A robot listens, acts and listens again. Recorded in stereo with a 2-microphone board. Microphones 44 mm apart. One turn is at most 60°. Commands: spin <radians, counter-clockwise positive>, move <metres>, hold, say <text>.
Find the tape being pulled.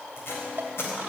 spin 1.05
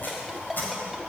spin 0.87
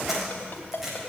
spin -0.17
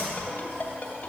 hold
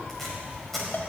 say Facing the tape being pulled, over 4 m away.